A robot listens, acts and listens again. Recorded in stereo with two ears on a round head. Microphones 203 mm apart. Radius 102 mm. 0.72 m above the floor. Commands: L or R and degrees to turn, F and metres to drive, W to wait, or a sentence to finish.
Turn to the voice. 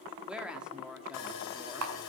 R30
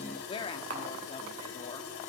L25
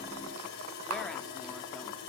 Facing the woman speaking, 1 to 2 m away.